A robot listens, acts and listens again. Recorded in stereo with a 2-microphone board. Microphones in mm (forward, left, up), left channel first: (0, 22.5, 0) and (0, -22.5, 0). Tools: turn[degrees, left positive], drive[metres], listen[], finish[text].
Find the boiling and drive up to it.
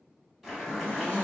Action: turn[-30]
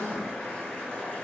Thought: So it is at 25° left.
Action: turn[25]
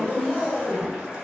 Thought: The boiling is now 20° right.
Action: turn[-20]
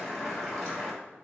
Action: drive[1.0]
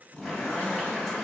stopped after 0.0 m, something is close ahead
Action: finish[Something is in my way. I am facing the boiling but have not reached it.]